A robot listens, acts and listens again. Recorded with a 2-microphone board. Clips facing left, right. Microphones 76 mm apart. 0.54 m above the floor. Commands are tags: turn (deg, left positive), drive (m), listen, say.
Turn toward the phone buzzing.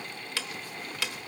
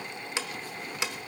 <listen/>
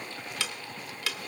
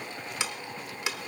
<listen/>
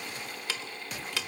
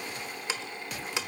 <say>I can't make out a phone buzzing, only ticking.</say>